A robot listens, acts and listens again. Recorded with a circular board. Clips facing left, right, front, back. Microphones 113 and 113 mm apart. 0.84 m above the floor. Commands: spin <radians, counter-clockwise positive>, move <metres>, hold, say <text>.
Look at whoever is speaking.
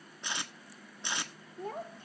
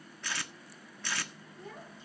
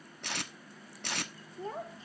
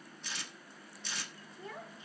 spin 0.96
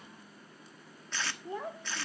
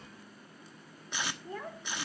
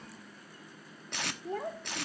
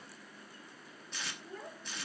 spin 0.35
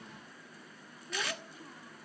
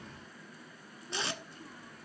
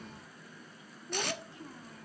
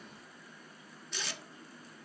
hold
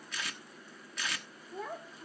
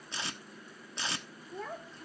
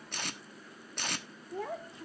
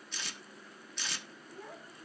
say Facing the child speaking.